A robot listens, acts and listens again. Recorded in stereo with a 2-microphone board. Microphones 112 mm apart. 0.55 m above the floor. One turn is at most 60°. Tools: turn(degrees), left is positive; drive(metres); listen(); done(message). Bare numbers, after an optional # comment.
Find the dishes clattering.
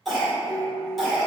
# The dishes clattering: about 60° left or 120° left.
turn(60)
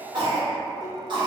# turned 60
listen()
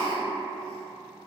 listen()
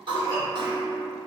# So it is at 15° left.
turn(15)
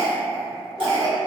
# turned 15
listen()
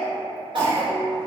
done("Found it: dishes clattering, straight ahead.")